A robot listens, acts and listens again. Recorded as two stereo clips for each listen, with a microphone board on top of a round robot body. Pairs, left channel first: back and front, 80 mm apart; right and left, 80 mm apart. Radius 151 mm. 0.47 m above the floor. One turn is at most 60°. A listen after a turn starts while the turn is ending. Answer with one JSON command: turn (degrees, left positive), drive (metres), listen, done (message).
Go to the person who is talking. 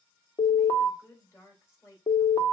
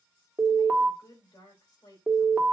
{"turn": -60}
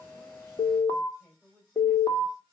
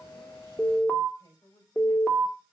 {"turn": -60}
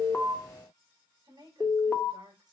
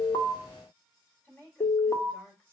{"turn": -25}
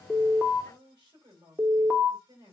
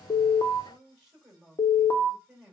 {"drive": 1.0}
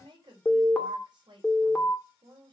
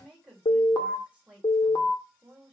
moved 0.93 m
{"turn": 15}
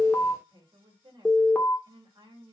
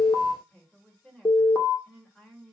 {"drive": 1.0}
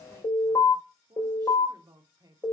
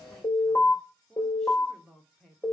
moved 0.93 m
{"turn": -10}
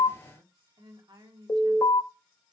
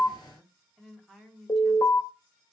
{"drive": 1.0}
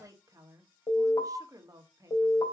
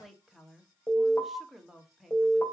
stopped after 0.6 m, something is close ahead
{"done": "Arrived at the woman speaking, straight ahead."}